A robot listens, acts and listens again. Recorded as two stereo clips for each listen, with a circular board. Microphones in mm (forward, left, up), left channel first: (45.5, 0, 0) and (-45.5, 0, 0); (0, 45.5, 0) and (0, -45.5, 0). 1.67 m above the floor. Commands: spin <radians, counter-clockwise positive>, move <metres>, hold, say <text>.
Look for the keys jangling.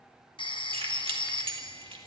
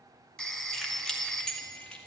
spin 2.97
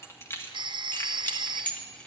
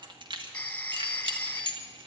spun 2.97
spin -1.31
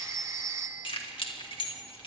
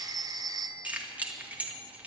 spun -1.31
spin -0.26
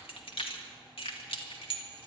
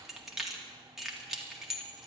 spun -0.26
say Facing the keys jangling, 2 to 4 m away.